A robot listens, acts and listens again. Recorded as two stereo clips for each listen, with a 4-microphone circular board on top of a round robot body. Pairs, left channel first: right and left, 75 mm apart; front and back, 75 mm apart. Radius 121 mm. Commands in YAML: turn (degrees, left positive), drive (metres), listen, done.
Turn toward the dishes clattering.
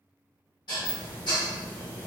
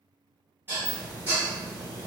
turn: -120
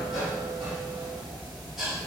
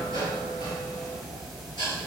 done: "Facing the dishes clattering."